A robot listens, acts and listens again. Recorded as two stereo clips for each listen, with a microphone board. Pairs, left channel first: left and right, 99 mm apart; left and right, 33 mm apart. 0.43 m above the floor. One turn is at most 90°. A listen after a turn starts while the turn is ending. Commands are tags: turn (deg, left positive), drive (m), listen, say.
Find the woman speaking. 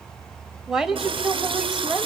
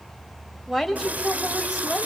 <turn deg="-30"/>
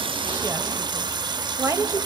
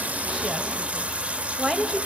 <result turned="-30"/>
<turn deg="-90"/>
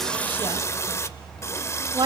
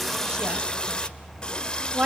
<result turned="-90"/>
<turn deg="-55"/>
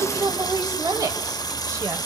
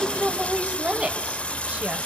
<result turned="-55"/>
<turn deg="-40"/>
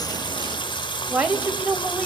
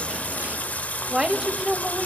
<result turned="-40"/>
<turn deg="-20"/>
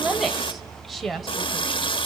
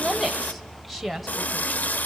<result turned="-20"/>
<say>Facing the woman speaking, 1 to 2 m away.</say>